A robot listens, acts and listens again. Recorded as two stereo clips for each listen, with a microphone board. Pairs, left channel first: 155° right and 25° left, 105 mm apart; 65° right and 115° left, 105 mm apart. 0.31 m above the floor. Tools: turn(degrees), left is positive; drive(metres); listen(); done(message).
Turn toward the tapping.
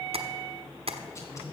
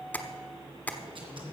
done("Found it: tapping, straight ahead, 1 to 2 m away.")